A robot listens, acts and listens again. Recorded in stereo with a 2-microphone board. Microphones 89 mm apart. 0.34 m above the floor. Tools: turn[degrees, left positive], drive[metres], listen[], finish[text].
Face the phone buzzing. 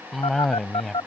Action: turn[90]
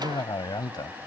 Action: listen[]
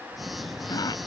Action: finish[Found it: a phone buzzing, straight ahead.]